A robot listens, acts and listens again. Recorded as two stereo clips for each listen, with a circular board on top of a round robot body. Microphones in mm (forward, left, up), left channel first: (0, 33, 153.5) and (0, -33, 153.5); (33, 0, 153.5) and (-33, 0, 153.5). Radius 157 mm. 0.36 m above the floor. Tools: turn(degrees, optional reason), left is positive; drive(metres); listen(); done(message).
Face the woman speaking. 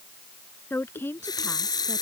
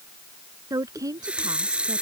turn(degrees=150, reason="The woman speaking: 150° left.")
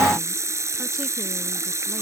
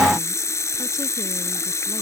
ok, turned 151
listen()
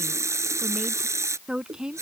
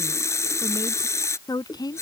turn(degrees=-10, reason="The woman speaking is now 10° right.")
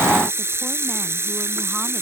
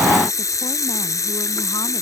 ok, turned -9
listen()
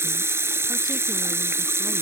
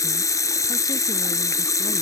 listen()
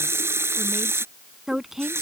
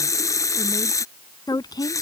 done("Facing the woman speaking.")